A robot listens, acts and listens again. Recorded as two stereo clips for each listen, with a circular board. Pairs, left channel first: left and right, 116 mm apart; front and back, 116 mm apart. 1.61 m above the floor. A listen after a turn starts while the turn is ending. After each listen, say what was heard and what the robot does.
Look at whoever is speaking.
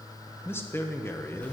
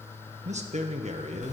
The man speaking: 160° left. Turn 160° left.
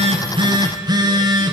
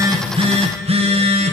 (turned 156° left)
Keep listening.
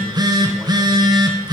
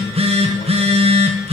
Keep listening.
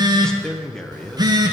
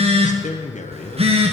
Found it: a man speaking, straight ahead, 1 to 2 m away.